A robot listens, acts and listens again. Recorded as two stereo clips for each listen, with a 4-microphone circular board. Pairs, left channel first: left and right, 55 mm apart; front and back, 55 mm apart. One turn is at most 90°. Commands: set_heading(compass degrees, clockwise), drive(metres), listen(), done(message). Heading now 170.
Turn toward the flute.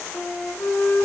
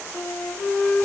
set_heading(115)
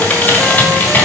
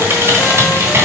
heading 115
listen()
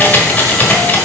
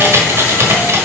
listen()
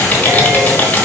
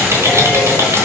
done("Facing where the flute came from. I can't hear it now.")